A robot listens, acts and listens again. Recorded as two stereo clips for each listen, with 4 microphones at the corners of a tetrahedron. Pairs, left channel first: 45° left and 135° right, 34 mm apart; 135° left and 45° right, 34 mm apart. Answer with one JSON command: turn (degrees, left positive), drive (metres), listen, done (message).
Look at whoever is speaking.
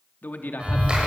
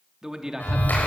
{"turn": 25}
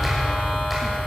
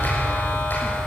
{"listen": true}
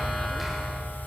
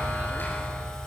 {"listen": true}
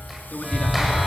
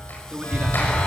{"done": "Found it: a man speaking, straight ahead."}